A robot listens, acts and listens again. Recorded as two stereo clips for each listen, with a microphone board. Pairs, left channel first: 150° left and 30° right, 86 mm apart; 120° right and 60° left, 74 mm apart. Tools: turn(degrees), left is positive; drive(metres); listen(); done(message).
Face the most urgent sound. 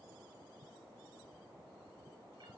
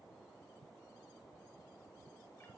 listen()
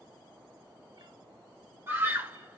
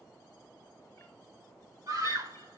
turn(degrees=30)
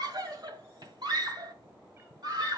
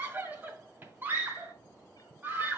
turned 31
done("Found it: a scream, straight ahead, 1 to 2 m away.")